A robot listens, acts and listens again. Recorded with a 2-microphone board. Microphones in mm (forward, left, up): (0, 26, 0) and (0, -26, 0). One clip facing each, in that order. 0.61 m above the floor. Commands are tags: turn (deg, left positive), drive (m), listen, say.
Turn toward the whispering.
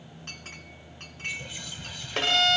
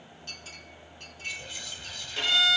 <turn deg="30"/>
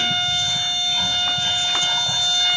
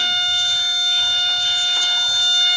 <listen/>
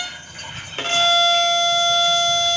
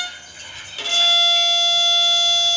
<turn deg="145"/>
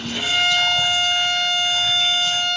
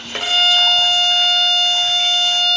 <listen/>
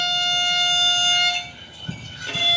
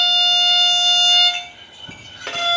<say>Facing the whispering.</say>